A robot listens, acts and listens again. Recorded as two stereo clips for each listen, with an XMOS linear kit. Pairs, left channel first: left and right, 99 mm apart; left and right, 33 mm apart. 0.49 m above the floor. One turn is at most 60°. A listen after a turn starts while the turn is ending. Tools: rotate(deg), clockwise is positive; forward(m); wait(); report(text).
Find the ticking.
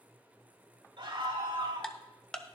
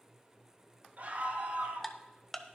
rotate(-30)
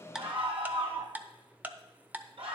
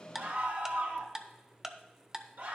rotate(20)
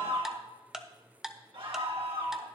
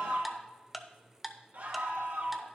report("Facing the ticking, under 1 m away.")